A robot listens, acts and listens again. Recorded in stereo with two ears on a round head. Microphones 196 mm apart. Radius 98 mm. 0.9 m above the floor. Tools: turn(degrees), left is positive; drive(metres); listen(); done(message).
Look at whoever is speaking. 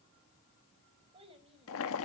turn(degrees=-25)
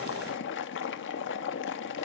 listen()
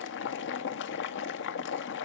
listen()
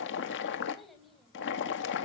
done("Found it: a child speaking, straight ahead, over 4 m away.")